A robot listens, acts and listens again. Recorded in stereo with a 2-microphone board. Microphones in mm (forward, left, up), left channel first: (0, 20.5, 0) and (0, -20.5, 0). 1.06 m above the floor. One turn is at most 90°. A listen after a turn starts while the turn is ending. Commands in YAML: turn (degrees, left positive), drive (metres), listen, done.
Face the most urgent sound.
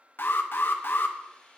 turn: 60
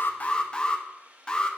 turn: 25
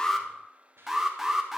turn: -10
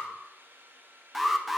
done: "Facing the alarm."